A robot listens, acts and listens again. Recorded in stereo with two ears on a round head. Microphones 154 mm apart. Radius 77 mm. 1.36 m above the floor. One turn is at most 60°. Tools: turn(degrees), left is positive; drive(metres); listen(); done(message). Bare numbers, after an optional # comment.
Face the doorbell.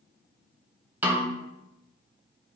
listen()
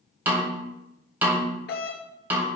# The doorbell: about 65° left or 115° left.
turn(60)
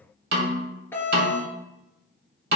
# So it is at 15° left.
turn(15)
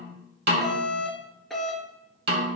done("Found it: a doorbell, straight ahead.")